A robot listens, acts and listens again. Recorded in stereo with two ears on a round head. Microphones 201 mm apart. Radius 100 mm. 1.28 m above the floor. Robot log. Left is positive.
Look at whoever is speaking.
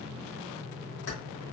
cmd idle
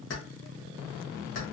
cmd idle
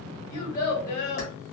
note: The child speaking: about 45° left or 135° left.
cmd yaw +45
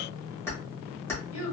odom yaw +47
note: So it is at 85° left.
cmd yaw +85
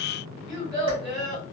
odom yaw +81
end: Facing the child speaking.